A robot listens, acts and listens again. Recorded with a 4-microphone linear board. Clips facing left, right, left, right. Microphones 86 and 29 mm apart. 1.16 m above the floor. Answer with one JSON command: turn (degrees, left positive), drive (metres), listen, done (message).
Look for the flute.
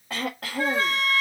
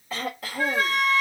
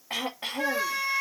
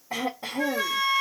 {"turn": 25}
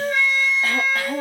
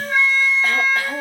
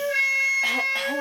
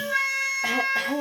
{"turn": 125}
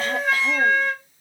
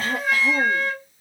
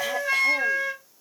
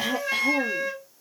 {"done": "Facing the flute."}